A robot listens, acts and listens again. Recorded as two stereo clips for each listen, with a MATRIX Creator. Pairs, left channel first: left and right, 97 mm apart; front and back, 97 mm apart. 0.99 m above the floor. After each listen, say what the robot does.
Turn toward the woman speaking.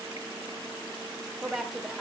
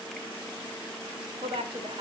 Turn 175° right.
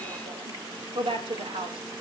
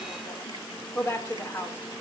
Turn 65° right.
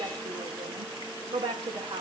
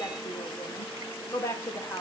Turn 65° right.
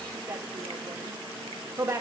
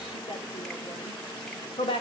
Turn 25° right.
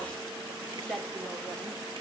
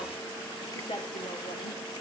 Found it: a woman speaking, straight ahead.